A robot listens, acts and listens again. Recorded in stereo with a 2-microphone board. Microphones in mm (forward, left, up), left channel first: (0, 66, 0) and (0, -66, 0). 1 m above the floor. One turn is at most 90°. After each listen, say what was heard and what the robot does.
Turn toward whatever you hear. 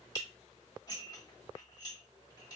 The dishes clattering: about 30° left or 150° left. Turn 30° left.
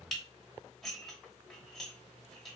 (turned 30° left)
Found it: dishes clattering, straight ahead.